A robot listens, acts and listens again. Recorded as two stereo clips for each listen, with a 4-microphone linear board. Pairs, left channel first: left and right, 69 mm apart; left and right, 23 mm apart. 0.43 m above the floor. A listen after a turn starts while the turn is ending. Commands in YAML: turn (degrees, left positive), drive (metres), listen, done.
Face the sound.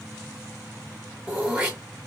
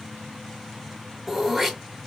turn: -20
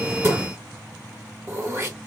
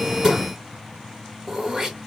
turn: -140
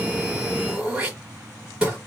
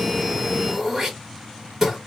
turn: -10
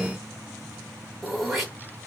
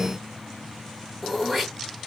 done: "Found it: throat clearing, straight ahead."